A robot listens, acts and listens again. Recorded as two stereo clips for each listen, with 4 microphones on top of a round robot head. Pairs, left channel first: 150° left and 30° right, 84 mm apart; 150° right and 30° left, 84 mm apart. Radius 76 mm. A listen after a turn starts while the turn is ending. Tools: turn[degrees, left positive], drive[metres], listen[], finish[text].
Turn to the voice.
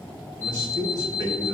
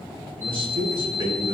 Thought: The man speaking: 15° left.
Action: turn[15]
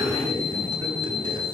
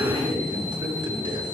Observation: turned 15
Action: finish[Found it: a man speaking, straight ahead.]